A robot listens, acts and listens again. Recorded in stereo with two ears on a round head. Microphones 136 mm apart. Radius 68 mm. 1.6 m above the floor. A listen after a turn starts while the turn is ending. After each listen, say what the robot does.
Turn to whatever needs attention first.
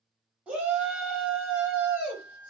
Turn 30° right.
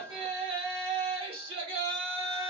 Turn 140° right.
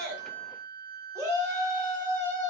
Turn 20° right.
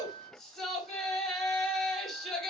Facing the shout.